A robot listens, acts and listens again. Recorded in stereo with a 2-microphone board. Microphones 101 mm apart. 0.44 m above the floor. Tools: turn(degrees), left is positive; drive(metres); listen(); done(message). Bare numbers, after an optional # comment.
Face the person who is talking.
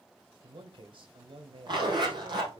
# The man speaking: about 60° right or 120° right.
turn(-60)
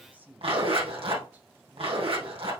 # So it is at 20° right.
turn(-20)
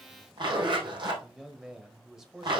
done("Found it: a man speaking, straight ahead, 1 to 2 m away.")